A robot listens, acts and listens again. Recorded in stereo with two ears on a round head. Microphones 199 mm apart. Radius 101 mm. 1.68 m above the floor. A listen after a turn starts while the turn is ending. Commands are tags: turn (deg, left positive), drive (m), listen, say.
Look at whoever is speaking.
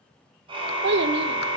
<turn deg="-50"/>
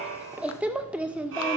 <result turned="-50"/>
<say>Facing the child speaking, 1 to 2 m away.</say>